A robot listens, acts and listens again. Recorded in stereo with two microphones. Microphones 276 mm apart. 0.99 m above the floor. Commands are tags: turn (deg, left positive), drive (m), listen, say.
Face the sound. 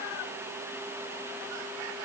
<listen/>
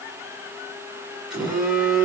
<turn deg="30"/>
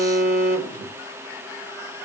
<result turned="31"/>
<turn deg="150"/>
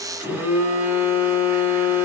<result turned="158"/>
<say>Facing the phone buzzing.</say>